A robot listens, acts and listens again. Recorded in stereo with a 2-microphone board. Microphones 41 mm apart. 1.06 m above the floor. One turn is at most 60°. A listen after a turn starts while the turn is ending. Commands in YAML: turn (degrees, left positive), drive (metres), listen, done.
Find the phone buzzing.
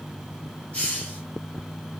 listen: true
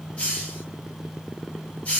listen: true
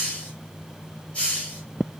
done: "I can't make out a phone buzzing, only a hiss."